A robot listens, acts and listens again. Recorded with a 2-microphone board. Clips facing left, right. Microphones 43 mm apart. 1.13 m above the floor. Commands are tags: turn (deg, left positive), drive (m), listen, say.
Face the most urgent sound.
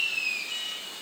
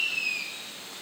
<turn deg="90"/>
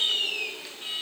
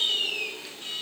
<turn deg="10"/>
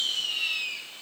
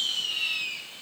<listen/>
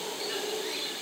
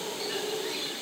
<listen/>
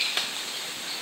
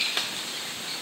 <say>Facing where the alarm came from. I can't hear it now.</say>